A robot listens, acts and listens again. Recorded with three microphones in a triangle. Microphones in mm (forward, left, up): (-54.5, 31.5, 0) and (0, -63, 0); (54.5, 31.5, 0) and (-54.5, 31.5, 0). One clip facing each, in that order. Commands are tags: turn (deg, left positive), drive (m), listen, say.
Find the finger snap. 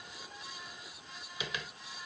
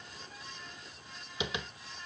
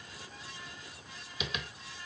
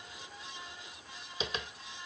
<listen/>
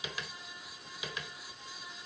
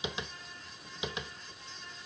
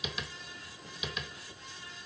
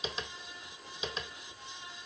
<listen/>
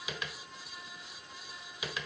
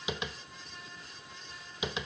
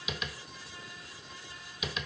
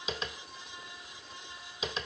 <say>I can't make out a finger snap, only tapping.</say>